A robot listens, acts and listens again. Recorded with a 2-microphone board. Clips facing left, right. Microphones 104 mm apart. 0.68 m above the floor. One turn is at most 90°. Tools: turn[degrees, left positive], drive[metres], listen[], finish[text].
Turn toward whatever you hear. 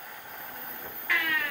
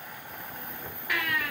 Action: turn[-30]
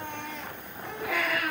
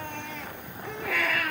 Thought: So it is at 15° left.
Action: turn[15]
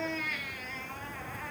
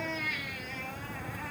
Action: finish[Found it: a baby crying, straight ahead, over 4 m away.]